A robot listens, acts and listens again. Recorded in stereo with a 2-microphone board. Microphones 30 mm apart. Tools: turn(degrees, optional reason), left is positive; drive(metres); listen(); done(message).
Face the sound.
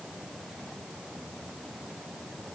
listen()
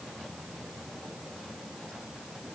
listen()
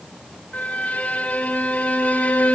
turn(degrees=60, reason="The violin: about 60° left or 120° left.")
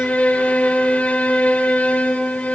turn(degrees=55, reason="So it is at 55° left.")
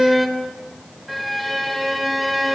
done("Facing the violin.")